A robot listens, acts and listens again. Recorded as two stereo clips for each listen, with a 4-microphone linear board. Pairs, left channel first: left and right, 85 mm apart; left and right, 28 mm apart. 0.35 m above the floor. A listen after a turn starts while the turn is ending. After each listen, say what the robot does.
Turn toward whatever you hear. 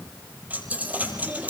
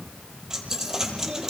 Turn 20° right.
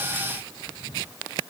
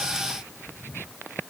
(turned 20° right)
Keep listening.
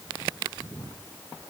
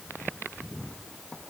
I heard a dropped coin, but can't make it out now. It was about straight ahead or 140° right.